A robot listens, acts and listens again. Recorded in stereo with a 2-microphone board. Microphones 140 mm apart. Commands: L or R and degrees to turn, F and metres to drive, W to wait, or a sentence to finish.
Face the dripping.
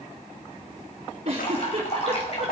L45
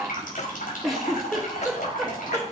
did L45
L85
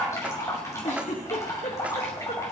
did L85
L20
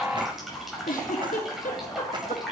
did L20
Facing the dripping, over 4 m away.